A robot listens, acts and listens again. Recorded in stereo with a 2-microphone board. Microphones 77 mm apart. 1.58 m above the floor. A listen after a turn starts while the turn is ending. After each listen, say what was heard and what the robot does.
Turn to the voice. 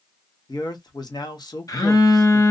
The man speaking: about 65° left or 115° left. Turn 65° left.
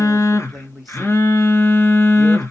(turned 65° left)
Found it: a man speaking, straight ahead.